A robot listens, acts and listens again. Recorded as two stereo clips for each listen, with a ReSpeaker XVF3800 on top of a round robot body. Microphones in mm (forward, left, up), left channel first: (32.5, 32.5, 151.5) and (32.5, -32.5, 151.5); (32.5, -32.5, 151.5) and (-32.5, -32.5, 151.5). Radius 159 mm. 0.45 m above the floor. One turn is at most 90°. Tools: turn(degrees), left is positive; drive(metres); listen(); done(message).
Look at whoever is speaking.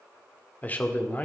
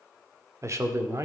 turn(degrees=90)
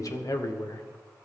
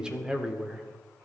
turn(degrees=90)
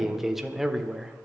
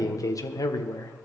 done("Found it: a man speaking, straight ahead.")